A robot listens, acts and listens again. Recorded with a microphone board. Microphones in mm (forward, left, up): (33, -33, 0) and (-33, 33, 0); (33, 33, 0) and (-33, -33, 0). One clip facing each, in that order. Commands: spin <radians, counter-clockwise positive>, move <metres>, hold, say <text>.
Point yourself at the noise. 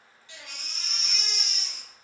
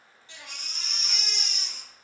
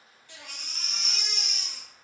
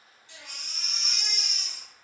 spin 1.40
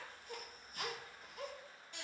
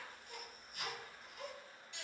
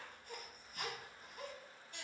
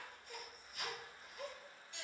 say Found it: a baby crying, straight ahead.